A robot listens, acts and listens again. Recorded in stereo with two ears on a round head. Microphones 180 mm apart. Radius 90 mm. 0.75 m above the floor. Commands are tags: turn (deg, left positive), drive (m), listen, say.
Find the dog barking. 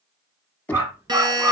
<turn deg="-30"/>
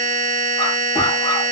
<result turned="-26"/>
<listen/>
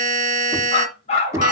<turn deg="35"/>
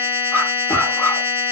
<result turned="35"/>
<turn deg="10"/>
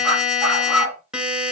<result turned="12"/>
<say>Facing the dog barking, 2 to 4 m away.</say>